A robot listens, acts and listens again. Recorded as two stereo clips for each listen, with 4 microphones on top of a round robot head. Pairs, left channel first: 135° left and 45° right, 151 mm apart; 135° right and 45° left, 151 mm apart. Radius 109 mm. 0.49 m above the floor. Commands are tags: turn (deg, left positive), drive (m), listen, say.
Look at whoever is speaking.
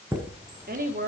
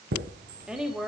<turn deg="-40"/>
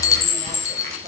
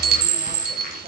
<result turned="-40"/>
<listen/>
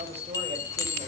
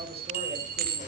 <listen/>
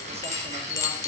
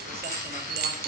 <say>I heard a woman speaking from this way, but can't make it out now.</say>